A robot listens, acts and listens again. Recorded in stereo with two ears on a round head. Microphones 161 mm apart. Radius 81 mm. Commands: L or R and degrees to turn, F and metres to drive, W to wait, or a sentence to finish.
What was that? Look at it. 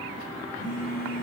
L55
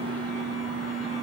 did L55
Facing the phone buzzing, 1 to 2 m away.